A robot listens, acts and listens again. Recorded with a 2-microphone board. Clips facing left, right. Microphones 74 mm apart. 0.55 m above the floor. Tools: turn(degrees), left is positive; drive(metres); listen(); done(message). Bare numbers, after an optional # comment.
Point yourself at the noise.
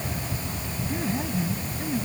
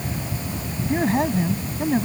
turn(-90)
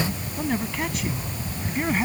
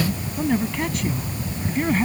done("Found it: a man speaking, straight ahead.")